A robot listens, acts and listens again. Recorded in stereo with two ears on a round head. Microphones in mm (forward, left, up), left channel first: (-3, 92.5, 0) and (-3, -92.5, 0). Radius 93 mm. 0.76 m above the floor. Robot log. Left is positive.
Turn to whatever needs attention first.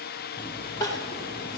note: The crying: about 20° left or 160° left.
cmd yaw +20
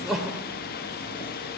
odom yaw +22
end: Facing the crying, 2 to 4 m away.